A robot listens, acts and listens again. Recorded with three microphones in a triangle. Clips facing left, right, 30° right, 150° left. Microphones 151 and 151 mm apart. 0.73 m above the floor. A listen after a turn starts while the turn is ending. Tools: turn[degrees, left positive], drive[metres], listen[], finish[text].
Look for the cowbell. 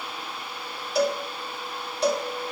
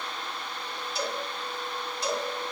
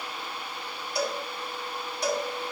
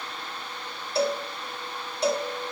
Thought: The cowbell: 90° left.
Action: turn[90]
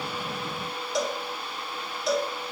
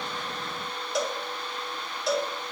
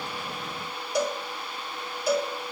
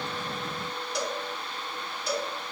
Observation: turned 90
Action: finish[Found it: a cowbell, straight ahead.]